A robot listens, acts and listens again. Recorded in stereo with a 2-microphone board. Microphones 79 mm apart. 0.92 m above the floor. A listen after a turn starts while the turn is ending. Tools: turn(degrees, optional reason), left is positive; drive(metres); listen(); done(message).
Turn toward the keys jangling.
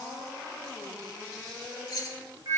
turn(degrees=50, reason="The keys jangling: about 50° left or 130° left.")
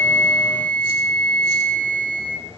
listen()
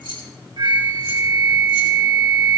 turn(degrees=85, reason="So it is at 85° left.")
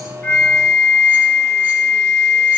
listen()
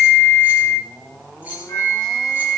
turn(degrees=-25, reason="The keys jangling is now 25° right.")
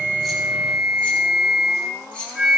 turn(degrees=15, reason="The keys jangling is now 15° left.")
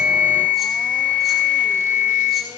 listen()
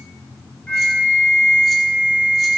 listen()
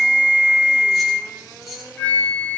done("Facing the keys jangling, 2 to 4 m away.")